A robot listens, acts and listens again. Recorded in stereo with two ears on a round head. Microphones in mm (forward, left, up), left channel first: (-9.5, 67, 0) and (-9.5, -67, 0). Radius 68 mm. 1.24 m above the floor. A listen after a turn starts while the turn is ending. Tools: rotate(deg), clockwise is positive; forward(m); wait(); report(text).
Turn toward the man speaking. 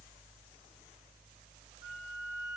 wait()
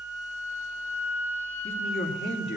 rotate(-90)
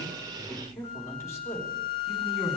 rotate(-20)
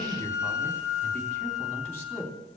rotate(-10)
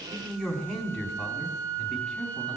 report("Facing the man speaking, 2 to 4 m away.")